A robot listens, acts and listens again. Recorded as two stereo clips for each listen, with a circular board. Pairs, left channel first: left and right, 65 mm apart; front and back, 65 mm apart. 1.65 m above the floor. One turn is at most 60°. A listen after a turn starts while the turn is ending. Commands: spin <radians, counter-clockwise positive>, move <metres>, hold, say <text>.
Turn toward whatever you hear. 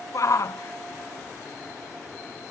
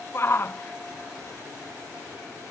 spin 0.96
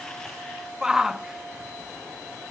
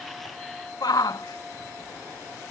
spin -0.17
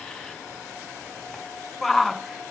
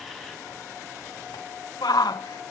say Found it: a shout, straight ahead.